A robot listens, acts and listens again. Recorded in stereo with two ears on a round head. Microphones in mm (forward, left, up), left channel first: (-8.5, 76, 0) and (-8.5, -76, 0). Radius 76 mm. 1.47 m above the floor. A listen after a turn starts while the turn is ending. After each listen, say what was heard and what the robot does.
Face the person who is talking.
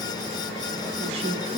The woman speaking: about 40° right or 140° right. Turn 40° right.
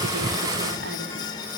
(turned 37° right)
Keep listening.
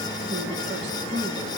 So it is at 100° right. Turn 100° right.
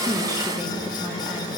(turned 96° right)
Keep listening.
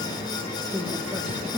Facing the woman speaking, 2 to 4 m away.